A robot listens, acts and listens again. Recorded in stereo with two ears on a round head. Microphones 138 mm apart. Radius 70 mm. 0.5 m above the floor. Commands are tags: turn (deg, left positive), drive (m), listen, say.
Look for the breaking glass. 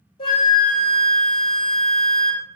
<listen/>
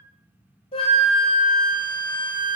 <listen/>
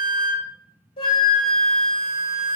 <say>I can't make out breaking glass to turn to.</say>